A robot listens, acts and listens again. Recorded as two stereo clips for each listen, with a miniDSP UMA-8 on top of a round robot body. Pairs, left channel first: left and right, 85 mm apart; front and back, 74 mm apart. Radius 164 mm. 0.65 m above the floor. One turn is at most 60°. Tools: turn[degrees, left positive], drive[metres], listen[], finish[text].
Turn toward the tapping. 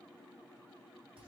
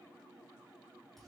Action: listen[]
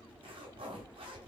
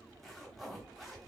Action: listen[]
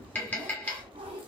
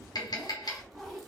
Thought: The tapping: 20° left.
Action: turn[20]
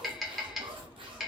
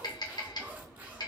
Action: finish[Found it: tapping, straight ahead.]